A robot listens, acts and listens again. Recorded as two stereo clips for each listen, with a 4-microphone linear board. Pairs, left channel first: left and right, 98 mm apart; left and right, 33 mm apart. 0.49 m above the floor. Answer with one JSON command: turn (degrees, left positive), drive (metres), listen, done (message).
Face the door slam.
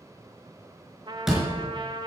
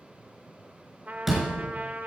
{"turn": -30}
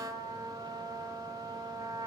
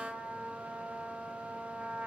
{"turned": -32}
{"listen": true}
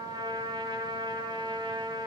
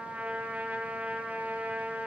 {"done": "I heard a door slam, but can't make it out now. It was about 30° left or 145° right."}